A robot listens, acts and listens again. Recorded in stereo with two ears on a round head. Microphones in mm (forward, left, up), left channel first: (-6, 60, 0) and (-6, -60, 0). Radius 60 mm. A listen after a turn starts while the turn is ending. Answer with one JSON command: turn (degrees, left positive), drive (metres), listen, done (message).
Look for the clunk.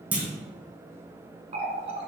{"turn": -30}
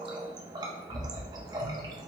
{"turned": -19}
{"listen": true}
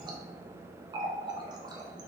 {"done": "I heard a clunk, but can't make it out now. It was about 10° left or 150° right."}